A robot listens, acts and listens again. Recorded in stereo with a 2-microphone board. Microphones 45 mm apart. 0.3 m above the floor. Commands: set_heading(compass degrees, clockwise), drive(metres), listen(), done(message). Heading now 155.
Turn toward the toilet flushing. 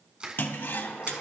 set_heading(105)
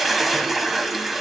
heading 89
done("Found it: a toilet flushing, straight ahead, under 1 m away.")